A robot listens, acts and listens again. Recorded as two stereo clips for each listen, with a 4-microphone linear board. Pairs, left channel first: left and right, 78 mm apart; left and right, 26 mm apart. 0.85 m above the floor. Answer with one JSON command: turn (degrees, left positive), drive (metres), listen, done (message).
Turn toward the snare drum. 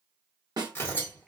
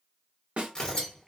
{"turn": -65}
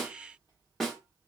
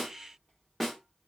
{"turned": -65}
{"done": "Facing the snare drum."}